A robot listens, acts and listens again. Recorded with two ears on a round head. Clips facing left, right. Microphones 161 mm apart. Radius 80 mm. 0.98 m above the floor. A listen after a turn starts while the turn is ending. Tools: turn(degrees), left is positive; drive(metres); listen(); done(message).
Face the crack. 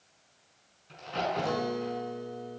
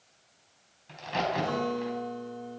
turn(degrees=-90)
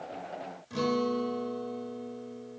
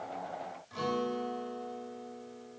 done("Facing where the crack came from. I can't hear it now.")